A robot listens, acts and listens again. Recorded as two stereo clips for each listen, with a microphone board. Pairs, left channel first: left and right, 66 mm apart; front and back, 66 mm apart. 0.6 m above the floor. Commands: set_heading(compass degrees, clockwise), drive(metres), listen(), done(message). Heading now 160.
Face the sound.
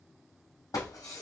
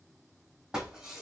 set_heading(60)
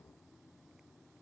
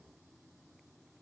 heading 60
done("I heard breaking glass from this way, but can't make it out now.")